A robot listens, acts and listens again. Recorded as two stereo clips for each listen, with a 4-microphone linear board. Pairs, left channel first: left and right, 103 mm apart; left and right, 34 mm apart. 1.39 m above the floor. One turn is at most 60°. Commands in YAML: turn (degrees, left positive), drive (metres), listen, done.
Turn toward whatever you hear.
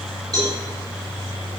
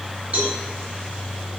turn: -35
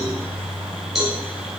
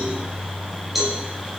done: "Found it: a cowbell, straight ahead, over 4 m away."